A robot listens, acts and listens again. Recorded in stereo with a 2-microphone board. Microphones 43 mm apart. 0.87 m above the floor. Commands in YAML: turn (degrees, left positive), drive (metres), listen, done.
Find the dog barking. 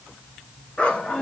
turn: 25
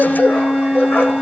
turn: 135
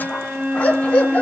turn: 30
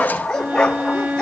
turn: 15
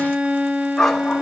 done: "Found it: a dog barking, straight ahead, 2 to 4 m away."